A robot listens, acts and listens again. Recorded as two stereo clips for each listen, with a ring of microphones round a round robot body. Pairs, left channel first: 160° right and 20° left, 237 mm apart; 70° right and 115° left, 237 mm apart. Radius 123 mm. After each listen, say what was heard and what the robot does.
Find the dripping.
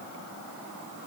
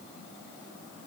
Keep listening.
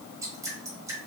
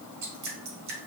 The dripping: 100° left. Turn 100° left.
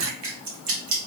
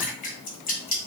The dripping is now 10° right. Turn 10° right.
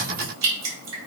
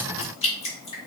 Found it: dripping, straight ahead.